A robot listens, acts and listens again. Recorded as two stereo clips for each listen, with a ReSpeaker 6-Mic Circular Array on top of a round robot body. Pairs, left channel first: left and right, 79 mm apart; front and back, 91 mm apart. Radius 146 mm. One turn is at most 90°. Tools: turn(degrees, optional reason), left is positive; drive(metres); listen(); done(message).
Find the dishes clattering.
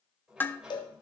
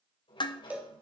turn(degrees=25, reason="The dishes clattering: 25° left.")
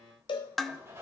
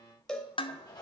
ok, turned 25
done("Facing the dishes clattering.")